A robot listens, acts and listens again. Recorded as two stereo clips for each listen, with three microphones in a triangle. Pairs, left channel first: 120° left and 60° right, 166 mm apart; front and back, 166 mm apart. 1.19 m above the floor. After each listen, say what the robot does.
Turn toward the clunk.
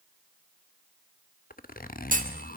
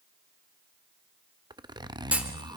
Turn 100° right.
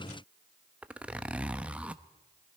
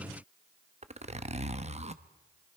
I heard a clunk from this way, but can't make it out now.